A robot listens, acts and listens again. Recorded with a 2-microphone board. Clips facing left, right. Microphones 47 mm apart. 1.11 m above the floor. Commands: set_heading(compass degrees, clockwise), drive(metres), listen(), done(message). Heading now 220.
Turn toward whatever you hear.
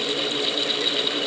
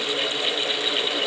listen()
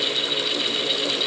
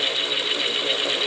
listen()
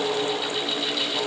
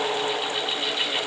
done("I can't make out anything.")